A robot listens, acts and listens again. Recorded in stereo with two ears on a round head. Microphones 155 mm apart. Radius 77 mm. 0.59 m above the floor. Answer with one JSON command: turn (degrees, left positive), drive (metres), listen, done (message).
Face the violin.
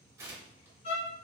{"turn": 40}
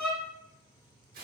{"done": "Facing the violin, under 1 m away."}